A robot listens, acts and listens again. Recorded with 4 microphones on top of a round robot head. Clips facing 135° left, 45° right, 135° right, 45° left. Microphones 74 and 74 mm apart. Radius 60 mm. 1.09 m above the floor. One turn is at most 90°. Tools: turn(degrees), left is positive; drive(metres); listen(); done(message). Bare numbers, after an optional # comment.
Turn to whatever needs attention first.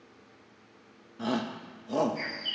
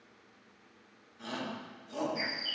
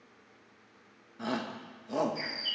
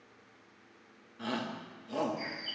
# The shout: 155° left.
turn(90)
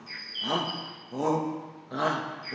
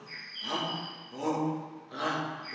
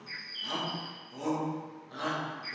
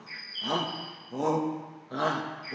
# The shout is now 85° left.
turn(85)
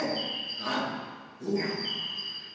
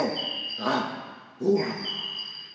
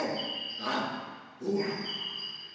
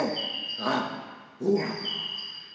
done("Found it: a shout, straight ahead.")